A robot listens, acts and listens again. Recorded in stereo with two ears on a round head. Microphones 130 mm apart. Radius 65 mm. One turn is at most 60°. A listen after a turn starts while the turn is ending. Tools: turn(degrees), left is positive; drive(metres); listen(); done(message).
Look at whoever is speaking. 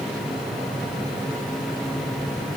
listen()
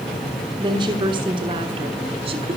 turn(degrees=-35)
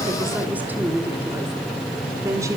turn(degrees=-15)
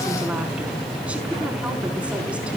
listen()
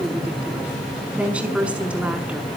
turn(degrees=-10)
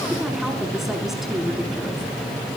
listen()
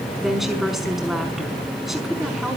done("Facing the woman speaking.")